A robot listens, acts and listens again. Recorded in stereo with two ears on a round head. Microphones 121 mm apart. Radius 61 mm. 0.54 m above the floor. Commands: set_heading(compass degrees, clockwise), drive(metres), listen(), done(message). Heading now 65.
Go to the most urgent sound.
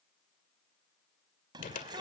set_heading(100)
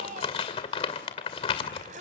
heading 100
set_heading(210)
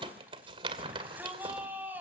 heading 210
set_heading(225)
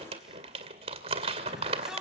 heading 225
drive(1.0)
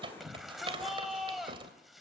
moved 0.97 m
drive(1.0)
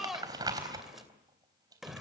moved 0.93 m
drive(1.0)
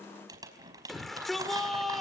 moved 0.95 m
drive(1.0)
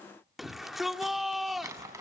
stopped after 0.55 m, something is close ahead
done("I am next to the shout.")